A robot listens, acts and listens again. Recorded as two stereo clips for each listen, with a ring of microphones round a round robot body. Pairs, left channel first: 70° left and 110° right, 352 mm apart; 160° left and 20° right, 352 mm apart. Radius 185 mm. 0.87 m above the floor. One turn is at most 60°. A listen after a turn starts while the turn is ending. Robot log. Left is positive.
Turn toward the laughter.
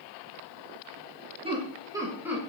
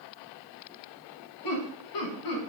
note: The laughter: 160° left.
cmd yaw +60
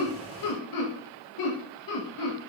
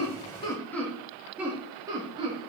note: The laughter is now 50° left.
cmd yaw +50
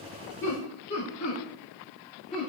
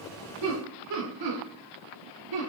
end: Facing the laughter, 2 to 4 m away.